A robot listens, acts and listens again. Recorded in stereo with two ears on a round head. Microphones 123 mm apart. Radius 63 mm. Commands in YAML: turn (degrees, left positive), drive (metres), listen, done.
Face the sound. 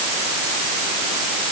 listen: true
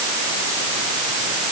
listen: true
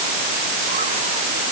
done: "I can't make out anything."